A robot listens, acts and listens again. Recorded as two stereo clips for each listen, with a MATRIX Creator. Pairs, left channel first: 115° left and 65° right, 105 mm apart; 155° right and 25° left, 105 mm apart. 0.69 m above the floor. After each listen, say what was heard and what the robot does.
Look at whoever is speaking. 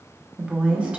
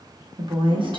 The woman speaking: 10° left. Turn 10° left.
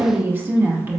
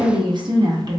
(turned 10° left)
Facing the woman speaking.